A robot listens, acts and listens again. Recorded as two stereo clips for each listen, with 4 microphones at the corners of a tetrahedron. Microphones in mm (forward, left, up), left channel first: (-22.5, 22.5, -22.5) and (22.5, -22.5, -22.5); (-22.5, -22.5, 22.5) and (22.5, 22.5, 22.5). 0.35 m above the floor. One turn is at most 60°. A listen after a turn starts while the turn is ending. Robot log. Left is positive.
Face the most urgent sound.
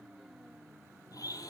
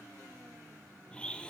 cmd idle
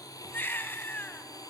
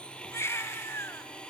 note: The baby crying: 175° right.
cmd yaw -60
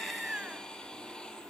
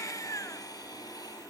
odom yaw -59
note: Nothing new. It was at 115° right.
cmd yaw -60
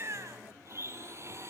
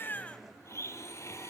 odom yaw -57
note: Nothing new. It was at 55° right.
cmd yaw -55
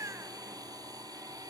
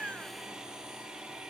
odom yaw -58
end: I heard a baby crying from this way, but can't make it out now.